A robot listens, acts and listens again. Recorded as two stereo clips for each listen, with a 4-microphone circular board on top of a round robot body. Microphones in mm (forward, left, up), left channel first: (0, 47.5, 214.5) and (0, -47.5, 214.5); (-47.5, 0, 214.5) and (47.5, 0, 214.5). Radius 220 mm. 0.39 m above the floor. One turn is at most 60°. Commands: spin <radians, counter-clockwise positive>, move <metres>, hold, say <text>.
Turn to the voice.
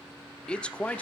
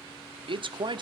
spin 0.26
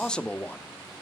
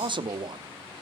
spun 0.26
spin 0.35
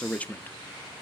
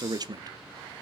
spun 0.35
spin 0.44
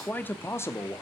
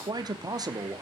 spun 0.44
spin 0.70
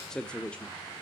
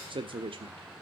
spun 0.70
spin 0.26
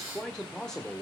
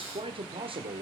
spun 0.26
spin 0.17
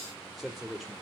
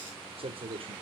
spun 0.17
say Facing the man speaking.